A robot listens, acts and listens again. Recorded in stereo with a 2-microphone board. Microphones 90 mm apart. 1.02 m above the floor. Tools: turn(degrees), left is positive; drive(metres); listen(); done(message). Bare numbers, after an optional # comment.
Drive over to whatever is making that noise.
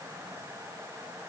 listen()
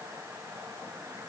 listen()
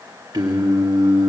# The singing: about 55° right or 125° right.
turn(-55)
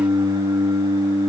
# So it is at 65° right.
turn(-65)
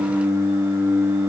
# The singing is now 25° right.
turn(-25)
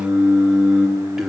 drive(1.0)
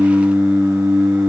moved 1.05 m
# The singing is now 10° right.
turn(-10)
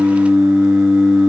drive(1.0)
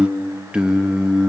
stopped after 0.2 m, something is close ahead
# The singing is now 10° right.
turn(-10)
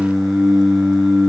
done("Arrived at the singing, straight ahead.")